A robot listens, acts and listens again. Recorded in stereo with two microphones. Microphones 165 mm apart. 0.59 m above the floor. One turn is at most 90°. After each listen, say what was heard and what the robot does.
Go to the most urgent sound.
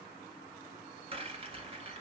Keep listening.
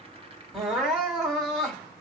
Turn 30° left.
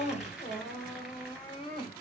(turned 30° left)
So it is at 150° left. Turn 90° left.
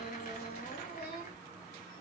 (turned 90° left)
The crying is now 90° left. Turn 90° left.
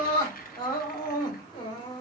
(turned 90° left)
The crying is now 25° left. Turn 25° left.
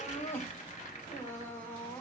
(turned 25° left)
The crying is now 10° left. Turn 10° left.
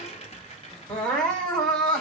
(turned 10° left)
Drive 1.0 m forward.
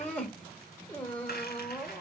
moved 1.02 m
The crying is now 10° left. Turn 10° left.
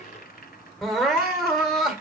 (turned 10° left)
Drive 1.0 m forward.
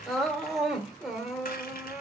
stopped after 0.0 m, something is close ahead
I am next to the crying.